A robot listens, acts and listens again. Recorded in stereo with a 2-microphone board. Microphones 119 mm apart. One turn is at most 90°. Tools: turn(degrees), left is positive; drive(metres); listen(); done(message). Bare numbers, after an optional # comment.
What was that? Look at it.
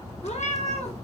# The cat meowing: about 70° left or 110° left.
turn(70)
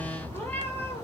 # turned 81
# So it is at 20° left.
turn(20)
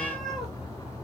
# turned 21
done("Facing the cat meowing.")